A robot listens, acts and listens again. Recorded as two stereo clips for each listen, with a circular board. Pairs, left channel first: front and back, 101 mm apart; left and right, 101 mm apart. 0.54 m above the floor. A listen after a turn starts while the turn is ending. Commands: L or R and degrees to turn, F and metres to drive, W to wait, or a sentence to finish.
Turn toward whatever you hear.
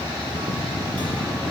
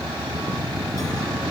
W
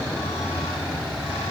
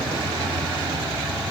W
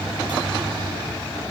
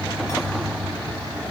I can't make out anything to turn to.